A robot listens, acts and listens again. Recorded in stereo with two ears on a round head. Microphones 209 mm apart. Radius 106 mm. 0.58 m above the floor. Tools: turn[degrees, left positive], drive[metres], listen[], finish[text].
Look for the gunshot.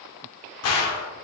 Thought: The gunshot: about 75° left or 105° left.
Action: turn[75]
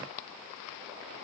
Action: listen[]
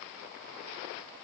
Action: finish[I heard a gunshot, but can't make it out now. It was about straight ahead or 30° left.]